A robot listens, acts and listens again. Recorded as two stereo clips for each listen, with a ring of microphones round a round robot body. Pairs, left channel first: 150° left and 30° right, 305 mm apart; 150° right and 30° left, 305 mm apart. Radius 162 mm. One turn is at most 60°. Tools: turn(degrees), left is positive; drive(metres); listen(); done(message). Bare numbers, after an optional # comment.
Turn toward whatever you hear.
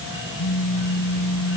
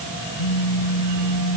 # The phone buzzing: 165° right.
turn(-60)
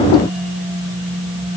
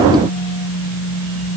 # The phone buzzing is now 105° right.
turn(-60)
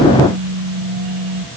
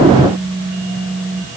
# The phone buzzing is now 45° right.
turn(-45)
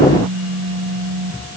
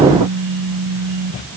# The phone buzzing is now 10° left.
turn(10)
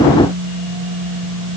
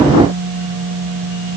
done("Facing the phone buzzing.")